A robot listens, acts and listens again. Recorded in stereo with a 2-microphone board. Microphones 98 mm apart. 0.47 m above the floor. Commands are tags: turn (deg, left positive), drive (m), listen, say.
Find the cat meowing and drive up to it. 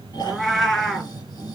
<turn deg="30"/>
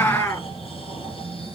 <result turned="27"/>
<turn deg="150"/>
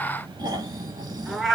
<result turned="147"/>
<drive m="1.0"/>
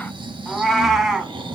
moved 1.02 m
<drive m="1.0"/>
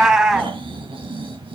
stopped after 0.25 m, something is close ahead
<turn deg="-10"/>
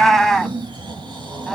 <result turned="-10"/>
<say>I am next to the cat meowing.</say>